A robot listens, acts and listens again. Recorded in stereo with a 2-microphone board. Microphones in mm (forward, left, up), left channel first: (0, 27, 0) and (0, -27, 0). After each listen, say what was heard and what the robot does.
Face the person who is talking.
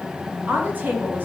The woman speaking: about 35° right or 145° right. Turn 35° right.
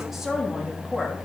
Keep listening.
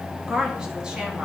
So it is at 10° right. Turn 10° right.
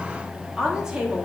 The woman speaking is now 15° right. Turn 15° right.
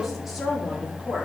Found it: a woman speaking, straight ahead, 2 to 4 m away.